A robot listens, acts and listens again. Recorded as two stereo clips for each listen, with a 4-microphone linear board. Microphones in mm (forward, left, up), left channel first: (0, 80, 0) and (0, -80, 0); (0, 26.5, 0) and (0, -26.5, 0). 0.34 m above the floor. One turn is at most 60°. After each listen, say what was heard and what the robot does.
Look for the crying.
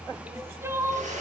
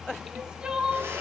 The crying: about 15° right or 165° right. Turn 15° right.
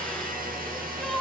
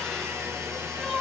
Facing the crying, 2 to 4 m away.